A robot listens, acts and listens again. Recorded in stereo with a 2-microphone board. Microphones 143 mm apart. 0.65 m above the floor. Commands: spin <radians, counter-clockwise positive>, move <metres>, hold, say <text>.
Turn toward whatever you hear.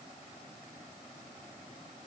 hold
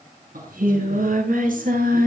spin -1.57
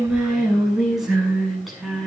say Facing the singing, over 4 m away.